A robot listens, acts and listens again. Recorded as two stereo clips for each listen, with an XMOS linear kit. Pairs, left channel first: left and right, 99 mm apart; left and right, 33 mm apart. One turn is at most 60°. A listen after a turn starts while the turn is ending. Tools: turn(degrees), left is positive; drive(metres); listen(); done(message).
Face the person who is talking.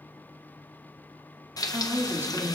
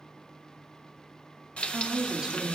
turn(degrees=-25)
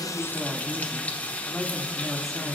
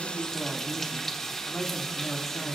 done("Facing the woman speaking, 2 to 4 m away.")